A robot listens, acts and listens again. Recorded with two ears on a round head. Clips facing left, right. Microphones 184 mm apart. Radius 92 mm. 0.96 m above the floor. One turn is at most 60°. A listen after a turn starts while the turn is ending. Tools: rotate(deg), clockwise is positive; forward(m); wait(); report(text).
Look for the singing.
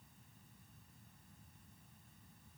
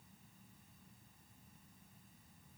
wait()
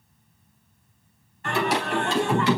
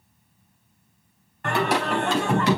rotate(40)
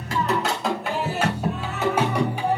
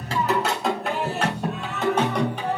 rotate(-10)
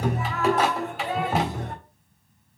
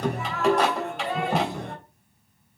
report("Found it: singing, straight ahead, 2 to 4 m away.")